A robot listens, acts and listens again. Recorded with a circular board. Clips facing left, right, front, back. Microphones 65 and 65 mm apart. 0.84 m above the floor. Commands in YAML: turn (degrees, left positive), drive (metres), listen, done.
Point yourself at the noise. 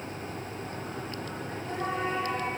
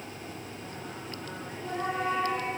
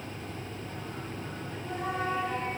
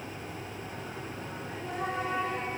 turn: -175
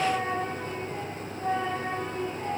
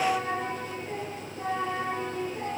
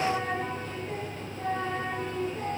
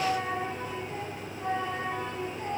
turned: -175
turn: -55
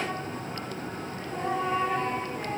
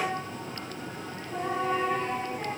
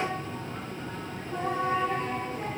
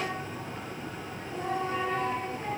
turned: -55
done: "Facing the singing, over 4 m away."